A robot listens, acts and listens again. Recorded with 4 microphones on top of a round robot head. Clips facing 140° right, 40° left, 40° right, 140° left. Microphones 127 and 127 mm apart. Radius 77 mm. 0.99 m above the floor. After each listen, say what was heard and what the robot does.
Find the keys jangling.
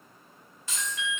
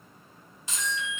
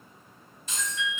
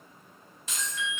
The keys jangling: 115° left. Turn 115° left.
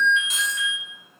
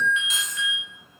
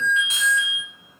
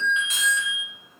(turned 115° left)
Keep listening.
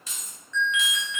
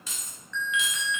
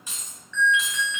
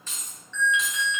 The keys jangling is now 40° left. Turn 40° left.
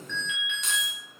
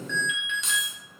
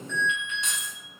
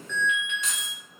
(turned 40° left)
Keep listening.
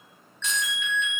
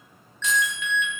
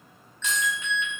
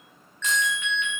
Keep listening.
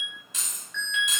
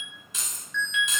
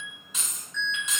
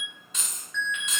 The keys jangling is now 40° left. Turn 40° left.
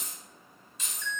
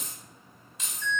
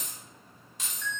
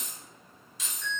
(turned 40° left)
Facing the keys jangling.